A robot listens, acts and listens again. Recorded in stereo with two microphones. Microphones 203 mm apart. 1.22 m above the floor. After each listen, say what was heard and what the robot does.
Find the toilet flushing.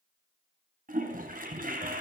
The toilet flushing: about 45° right or 135° right. Turn 45° right.
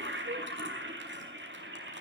So it is at 85° right. Turn 85° right.
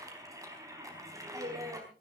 The toilet flushing is now 15° right. Turn 15° right.
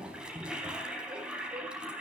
Found it: a toilet flushing, straight ahead.